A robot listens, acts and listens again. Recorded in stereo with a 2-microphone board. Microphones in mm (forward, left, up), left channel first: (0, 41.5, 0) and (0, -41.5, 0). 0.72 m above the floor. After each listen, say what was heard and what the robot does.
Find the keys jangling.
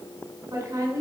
Keep listening.
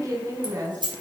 The keys jangling: about 65° right or 115° right. Turn 65° right.
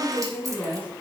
Keep listening.
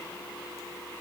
Keep listening.
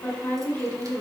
I heard keys jangling, but can't make it out now. It was about straight ahead or 50° right.